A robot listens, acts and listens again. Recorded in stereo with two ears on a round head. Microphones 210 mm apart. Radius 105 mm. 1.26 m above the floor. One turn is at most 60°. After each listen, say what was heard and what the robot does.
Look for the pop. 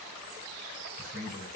Keep listening.
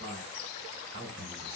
Keep listening.
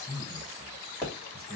Turn 30° left.
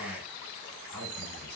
Keep listening.
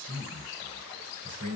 I heard a pop, but can't make it out now. It was about 20° right or 140° left.